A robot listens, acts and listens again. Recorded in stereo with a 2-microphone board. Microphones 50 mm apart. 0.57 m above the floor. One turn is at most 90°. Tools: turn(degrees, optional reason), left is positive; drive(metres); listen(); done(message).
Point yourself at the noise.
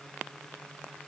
listen()
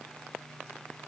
listen()
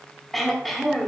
turn(degrees=30)
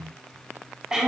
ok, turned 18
turn(degrees=-15, reason="So it is at 15° right.")
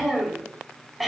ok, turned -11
done("Found it: throat clearing, straight ahead.")